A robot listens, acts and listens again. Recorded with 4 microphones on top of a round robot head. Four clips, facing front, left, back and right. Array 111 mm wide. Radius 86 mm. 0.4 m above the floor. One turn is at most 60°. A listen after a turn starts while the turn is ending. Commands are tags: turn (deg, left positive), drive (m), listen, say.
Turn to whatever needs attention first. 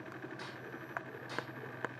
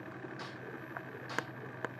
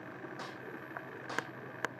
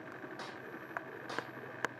<listen/>
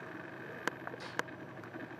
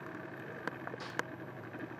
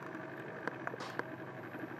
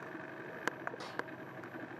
<listen/>
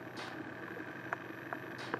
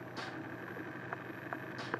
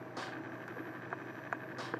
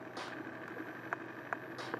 <say>I can't make out anything urgent to turn to.</say>